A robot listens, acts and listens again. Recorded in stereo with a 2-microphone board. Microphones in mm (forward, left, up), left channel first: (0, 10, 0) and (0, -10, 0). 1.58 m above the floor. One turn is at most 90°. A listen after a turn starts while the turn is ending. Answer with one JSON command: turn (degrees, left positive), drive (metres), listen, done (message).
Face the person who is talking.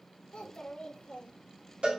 {"turn": 60}
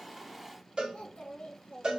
{"turn": 60}
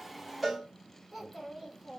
{"done": "Facing the child speaking, 1 to 2 m away."}